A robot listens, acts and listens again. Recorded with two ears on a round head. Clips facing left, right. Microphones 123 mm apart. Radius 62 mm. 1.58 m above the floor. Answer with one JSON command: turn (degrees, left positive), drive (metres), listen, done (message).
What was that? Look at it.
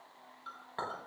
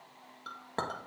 {"turn": -50}
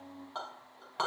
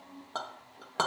{"turn": -70}
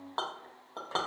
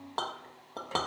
{"turn": -15}
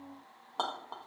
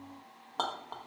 {"done": "Found it: a clink, straight ahead, 1 to 2 m away."}